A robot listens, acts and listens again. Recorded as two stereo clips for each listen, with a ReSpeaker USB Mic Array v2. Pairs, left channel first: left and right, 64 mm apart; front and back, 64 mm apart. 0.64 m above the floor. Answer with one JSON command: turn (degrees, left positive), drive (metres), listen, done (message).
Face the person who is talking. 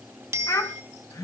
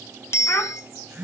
{"turn": 55}
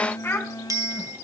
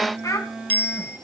{"turn": 35}
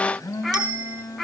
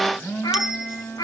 {"done": "Found it: a child speaking, straight ahead, 2 to 4 m away."}